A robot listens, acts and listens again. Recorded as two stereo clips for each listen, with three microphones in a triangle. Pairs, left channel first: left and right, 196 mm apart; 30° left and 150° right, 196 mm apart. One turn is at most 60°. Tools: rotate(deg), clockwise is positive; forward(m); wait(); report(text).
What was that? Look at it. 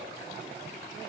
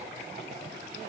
wait()
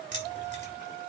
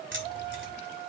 rotate(60)
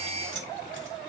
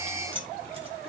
rotate(60)
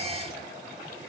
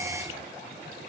rotate(25)
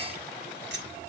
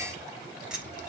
rotate(60)
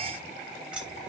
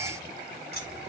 report("Facing the keys jangling.")